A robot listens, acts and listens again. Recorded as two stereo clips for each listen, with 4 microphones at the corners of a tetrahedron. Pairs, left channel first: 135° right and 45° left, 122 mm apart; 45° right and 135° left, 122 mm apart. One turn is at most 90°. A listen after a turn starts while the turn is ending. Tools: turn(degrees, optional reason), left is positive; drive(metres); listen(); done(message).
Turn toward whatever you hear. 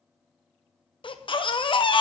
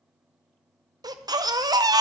turn(degrees=-90, reason="The baby crying: 170° right.")
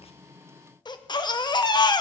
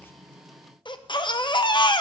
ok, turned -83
turn(degrees=-90, reason="The baby crying is now 90° right.")
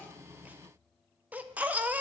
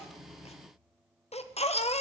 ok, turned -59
turn(degrees=-30, reason="The baby crying is now 30° right.")
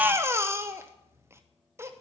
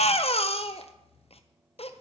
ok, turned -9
turn(degrees=-20, reason="The baby crying is now 20° right.")
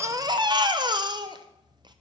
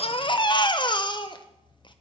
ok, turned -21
done("Found it: a baby crying, straight ahead.")